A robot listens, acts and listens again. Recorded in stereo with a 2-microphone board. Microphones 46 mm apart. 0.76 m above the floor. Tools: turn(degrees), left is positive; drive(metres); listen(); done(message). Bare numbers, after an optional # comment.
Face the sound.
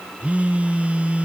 # The phone buzzing: about 30° right or 150° right.
turn(-30)
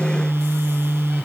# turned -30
# So it is at 120° right.
turn(-120)
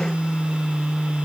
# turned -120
# The phone buzzing is now 25° right.
turn(-25)
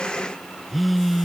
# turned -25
done("Found it: a phone buzzing, straight ahead.")